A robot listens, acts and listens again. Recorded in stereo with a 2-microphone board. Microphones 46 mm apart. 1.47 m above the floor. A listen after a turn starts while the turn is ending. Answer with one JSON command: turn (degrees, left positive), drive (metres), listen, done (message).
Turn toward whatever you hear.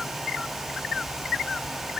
{"listen": true}
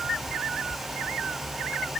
{"listen": true}
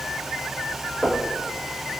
{"turn": -30}
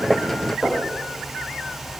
{"turn": 15}
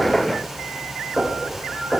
{"done": "Facing the knocking."}